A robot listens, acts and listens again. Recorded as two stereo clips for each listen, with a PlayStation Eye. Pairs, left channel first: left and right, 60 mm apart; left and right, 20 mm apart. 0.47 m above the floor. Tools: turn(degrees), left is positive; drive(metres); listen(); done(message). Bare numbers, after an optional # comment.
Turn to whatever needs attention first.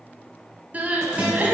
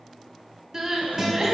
# The crying: about 25° right or 155° right.
turn(-25)
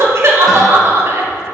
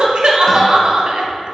# So it is at 130° right.
turn(-130)
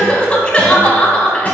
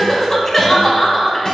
# The crying is now 15° left.
turn(15)
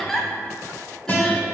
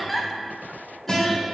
done("Found it: crying, straight ahead.")